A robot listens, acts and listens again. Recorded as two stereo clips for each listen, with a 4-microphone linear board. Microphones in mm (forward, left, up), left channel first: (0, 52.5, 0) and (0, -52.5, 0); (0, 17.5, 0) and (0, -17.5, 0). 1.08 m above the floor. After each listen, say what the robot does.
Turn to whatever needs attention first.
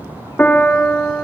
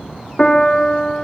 Keep listening.
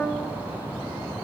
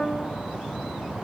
Keep listening.
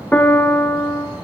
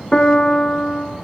I can't make out anything urgent to turn to.